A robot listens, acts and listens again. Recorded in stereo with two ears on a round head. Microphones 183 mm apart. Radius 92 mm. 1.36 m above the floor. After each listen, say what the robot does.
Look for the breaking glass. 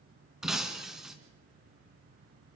Turn 30° right.
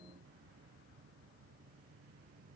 Keep listening.
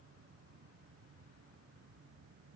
I heard breaking glass, but can't make it out now. It was about 25° left or 145° right.